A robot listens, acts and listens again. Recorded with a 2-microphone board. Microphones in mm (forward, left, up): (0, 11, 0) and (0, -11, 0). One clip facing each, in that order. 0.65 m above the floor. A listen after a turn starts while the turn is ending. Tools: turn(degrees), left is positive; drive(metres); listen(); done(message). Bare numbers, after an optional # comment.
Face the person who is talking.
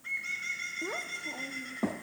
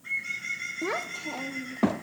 # The child speaking: about 55° right or 125° right.
turn(-55)
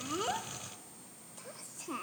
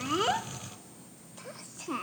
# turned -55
# So it is at 25° right.
turn(-25)
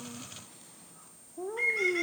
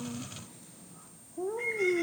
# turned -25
done("Facing the child speaking.")